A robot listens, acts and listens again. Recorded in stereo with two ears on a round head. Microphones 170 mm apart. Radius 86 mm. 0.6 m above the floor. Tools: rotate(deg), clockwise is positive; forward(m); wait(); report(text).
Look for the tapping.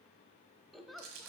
wait()
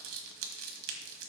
wait()
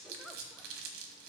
report("I can't make out tapping, only a giggle and crumpling.")